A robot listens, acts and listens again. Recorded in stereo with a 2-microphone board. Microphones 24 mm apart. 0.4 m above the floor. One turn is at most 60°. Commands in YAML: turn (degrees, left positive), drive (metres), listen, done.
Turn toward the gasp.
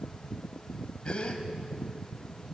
turn: 40
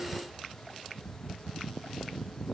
listen: true
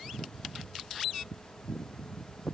done: "I heard a gasp, but can't make it out now. It was about straight ahead or 100° left."